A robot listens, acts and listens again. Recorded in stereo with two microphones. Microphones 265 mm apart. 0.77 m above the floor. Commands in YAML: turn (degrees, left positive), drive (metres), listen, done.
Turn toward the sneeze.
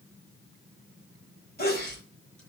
turn: 35
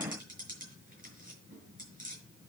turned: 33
listen: true
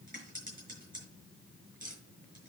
done: "I heard a sneeze, but can't make it out now. It was about 5° left or 110° left."